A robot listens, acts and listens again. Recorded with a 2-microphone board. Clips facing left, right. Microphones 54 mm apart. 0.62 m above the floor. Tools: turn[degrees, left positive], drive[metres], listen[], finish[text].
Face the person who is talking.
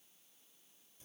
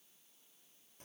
Action: listen[]
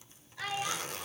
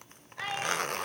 Thought: The child speaking: about 20° right or 160° right.
Action: turn[-20]
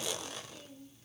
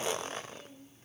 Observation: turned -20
Action: turn[-30]
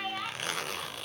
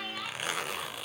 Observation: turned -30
Thought: So it is at 20° left.
Action: turn[20]
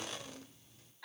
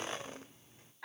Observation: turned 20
Thought: The child speaking is now 25° right.
Action: turn[-25]
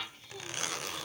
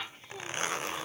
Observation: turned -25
Thought: The child speaking is now 25° right.
Action: turn[-25]
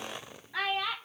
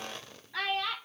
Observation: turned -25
Thought: The child speaking is now 10° left.
Action: turn[10]
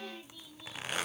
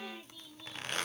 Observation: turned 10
Action: listen[]
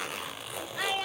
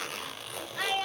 Action: finish[Facing the child speaking, 1 to 2 m away.]